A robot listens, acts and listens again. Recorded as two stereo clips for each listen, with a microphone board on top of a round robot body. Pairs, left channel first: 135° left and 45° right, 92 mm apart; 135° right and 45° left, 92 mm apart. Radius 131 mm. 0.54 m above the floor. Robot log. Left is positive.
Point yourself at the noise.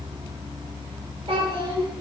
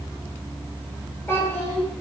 note: The child speaking: 75° right.
cmd yaw -75
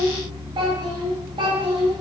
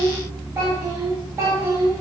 note: The child speaking is now 20° right.
cmd yaw -20
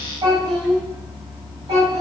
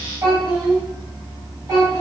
note: The child speaking is now 10° right.
cmd yaw -10
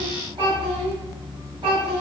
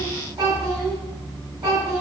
end: Facing the child speaking, 2 to 4 m away.